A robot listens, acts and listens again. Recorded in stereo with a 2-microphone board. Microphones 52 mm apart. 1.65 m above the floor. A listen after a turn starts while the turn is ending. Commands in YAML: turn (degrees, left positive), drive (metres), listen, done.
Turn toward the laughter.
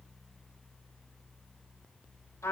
listen: true
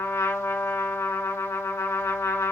listen: true
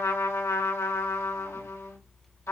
done: "I can't make out laughter to turn to."